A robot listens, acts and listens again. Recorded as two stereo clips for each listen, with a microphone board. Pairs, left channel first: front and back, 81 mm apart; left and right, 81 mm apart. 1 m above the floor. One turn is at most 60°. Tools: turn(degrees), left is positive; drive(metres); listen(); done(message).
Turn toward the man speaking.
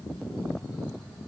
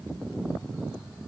listen()
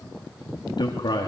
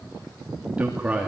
turn(degrees=-15)
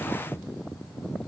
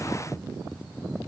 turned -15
listen()
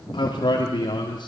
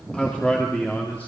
turn(degrees=20)
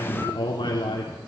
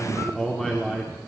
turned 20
turn(degrees=10)
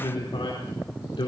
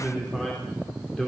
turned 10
done("Facing the man speaking, 2 to 4 m away.")